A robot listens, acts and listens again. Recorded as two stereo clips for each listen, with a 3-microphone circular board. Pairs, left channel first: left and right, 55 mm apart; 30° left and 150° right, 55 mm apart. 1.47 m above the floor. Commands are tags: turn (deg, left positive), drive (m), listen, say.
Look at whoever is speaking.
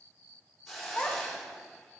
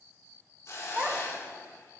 <turn deg="155"/>
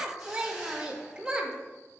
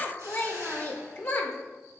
<turn deg="-20"/>
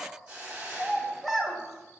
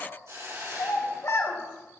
<say>Facing the child speaking, 1 to 2 m away.</say>